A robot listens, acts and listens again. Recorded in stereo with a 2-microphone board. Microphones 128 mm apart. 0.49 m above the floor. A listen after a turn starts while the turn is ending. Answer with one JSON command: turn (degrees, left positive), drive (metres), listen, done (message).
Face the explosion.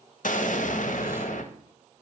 {"turn": 70}
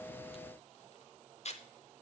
{"listen": true}
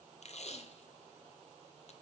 {"done": "I heard an explosion, but can't make it out now. It was about straight ahead or 40° left."}